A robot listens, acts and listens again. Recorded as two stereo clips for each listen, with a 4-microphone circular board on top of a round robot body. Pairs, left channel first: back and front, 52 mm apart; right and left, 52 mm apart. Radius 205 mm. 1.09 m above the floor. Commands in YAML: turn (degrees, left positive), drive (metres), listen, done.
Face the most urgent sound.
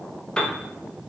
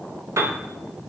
listen: true
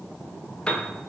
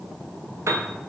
listen: true
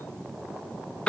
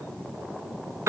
done: "I can't make out anything urgent to turn to."